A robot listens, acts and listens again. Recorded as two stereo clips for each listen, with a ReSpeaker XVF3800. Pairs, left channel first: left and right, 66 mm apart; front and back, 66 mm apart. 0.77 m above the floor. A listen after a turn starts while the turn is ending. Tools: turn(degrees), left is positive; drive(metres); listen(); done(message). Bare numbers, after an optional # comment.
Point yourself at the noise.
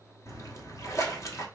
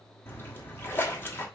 # The splash: 50° left.
turn(50)
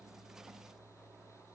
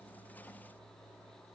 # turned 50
done("Facing where the splash came from. I can't hear it now.")